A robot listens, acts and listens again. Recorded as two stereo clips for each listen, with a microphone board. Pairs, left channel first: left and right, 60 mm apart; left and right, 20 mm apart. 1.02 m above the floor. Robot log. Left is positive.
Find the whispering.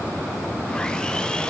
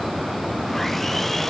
cmd idle
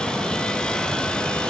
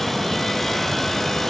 cmd idle
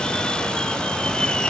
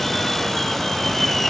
end: I can't make out whispering, only sawing.